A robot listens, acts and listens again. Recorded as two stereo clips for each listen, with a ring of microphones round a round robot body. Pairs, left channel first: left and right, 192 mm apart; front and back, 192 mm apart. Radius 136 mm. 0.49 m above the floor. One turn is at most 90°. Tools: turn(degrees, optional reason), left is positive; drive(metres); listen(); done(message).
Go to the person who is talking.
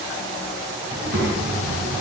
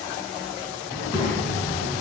turn(degrees=-65, reason="The child speaking: 65° right.")
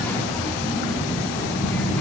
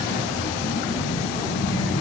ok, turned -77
turn(degrees=10, reason="The child speaking is now 10° left.")
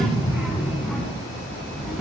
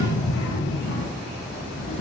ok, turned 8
drive(metres=1.0)
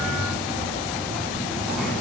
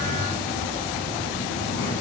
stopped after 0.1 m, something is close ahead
done("Something is in my way. I am facing the child speaking but have not reached it.")